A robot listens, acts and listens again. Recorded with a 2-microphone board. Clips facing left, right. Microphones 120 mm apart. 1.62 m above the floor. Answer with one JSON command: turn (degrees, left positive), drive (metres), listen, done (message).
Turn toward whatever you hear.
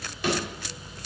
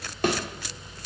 {"turn": -50}
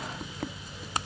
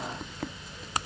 {"listen": true}
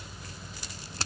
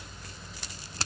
{"done": "I heard a thud, but can't make it out now. It was about straight ahead or 80° right."}